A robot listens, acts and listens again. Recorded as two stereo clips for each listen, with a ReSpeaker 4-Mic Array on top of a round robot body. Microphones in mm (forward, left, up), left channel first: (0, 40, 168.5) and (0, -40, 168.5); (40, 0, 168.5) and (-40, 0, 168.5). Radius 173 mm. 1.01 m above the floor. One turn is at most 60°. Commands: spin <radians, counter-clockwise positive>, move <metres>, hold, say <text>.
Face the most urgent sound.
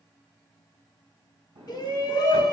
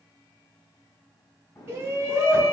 spin 1.05
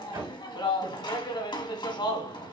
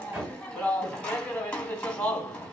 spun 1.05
spin 1.05
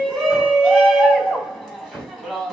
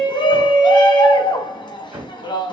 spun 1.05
say Facing the shout, 2 to 4 m away.